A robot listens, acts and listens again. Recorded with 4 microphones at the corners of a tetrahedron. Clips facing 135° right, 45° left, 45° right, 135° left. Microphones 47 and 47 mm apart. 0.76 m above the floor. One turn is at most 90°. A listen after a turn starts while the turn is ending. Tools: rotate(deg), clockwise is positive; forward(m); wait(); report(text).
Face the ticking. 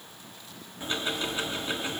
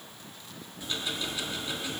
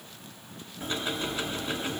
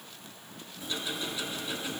rotate(85)
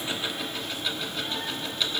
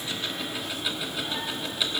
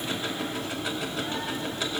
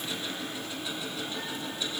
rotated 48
rotate(40)
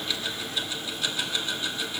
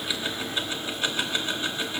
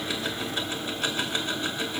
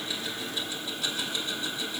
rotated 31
rotate(10)
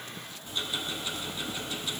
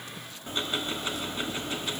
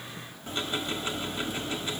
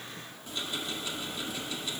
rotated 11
report("Found it: ticking, straight ahead.")